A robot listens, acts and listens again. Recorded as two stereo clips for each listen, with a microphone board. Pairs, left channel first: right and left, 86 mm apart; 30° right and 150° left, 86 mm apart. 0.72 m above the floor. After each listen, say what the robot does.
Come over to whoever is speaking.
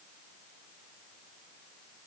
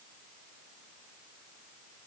Keep listening.
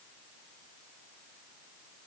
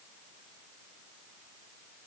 Keep listening.
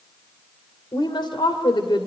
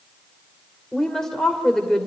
Turn 115° right.
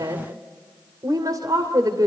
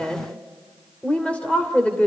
Turn 45° left.
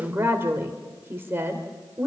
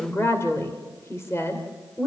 Turn 25° left.
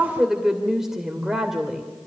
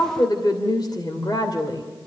Drive 1.0 m forward.
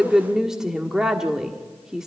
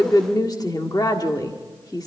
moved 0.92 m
Drive 1.0 m forward.
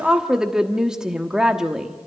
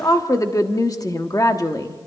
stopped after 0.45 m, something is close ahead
Turn 10° left.
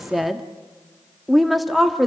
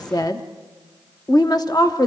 Arrived at the woman speaking, straight ahead.